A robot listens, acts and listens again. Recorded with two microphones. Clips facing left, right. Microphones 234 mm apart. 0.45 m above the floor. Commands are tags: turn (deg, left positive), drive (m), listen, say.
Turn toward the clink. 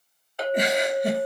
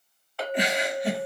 <turn deg="20"/>
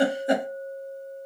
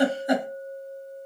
<turn deg="140"/>
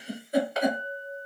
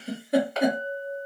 <turn deg="15"/>
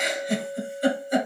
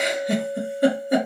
<say>Found it: a clink, straight ahead.</say>